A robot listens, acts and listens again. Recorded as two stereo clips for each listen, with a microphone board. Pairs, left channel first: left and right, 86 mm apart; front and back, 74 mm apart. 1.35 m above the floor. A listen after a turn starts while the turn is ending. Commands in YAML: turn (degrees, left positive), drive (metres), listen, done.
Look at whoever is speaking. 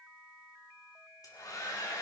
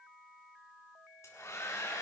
listen: true
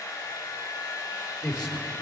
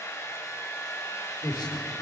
done: "Found it: a man speaking, straight ahead."